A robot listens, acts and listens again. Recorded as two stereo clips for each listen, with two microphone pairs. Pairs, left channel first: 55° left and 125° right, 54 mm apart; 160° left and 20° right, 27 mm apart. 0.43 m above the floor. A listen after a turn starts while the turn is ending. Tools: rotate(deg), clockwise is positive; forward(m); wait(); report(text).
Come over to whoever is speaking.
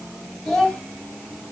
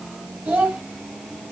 rotate(25)
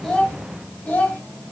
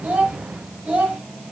forward(1.0)
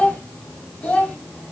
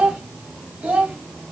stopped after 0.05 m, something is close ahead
rotate(10)
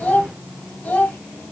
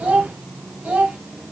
report("Something is in my way. I am facing the child speaking but have not reached it.")